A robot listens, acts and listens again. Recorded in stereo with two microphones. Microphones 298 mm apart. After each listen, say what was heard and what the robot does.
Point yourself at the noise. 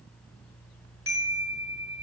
The chime: about 45° right or 135° right. Turn 45° right.
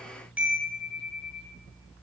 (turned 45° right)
Facing the chime, 1 to 2 m away.